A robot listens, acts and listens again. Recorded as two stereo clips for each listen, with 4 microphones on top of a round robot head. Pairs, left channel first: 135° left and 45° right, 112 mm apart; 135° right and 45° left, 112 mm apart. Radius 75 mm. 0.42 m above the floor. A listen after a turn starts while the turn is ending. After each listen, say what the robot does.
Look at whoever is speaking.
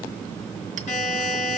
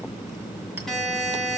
Keep listening.
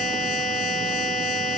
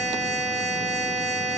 Keep listening.
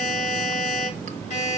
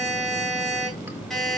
I can't make out anyone speaking, only a buzzer.